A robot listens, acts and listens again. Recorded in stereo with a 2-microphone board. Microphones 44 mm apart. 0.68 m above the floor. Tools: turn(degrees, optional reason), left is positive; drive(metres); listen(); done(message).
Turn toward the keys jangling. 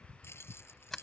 turn(degrees=65, reason="The keys jangling: about 65° left or 115° left.")
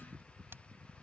listen()
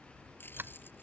listen()
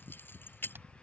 turn(degrees=50, reason="So it is at 50° left.")
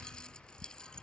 listen()
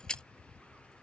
turn(degrees=20, reason="The keys jangling is now 20° left.")
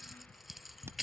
done("Facing the keys jangling.")